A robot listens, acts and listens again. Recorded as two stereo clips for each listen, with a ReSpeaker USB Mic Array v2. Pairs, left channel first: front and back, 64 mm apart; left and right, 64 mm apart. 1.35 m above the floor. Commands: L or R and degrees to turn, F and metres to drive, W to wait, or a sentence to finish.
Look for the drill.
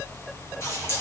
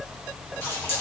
W
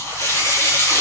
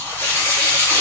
W
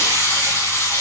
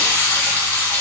I can't make out a drill, only a running tap.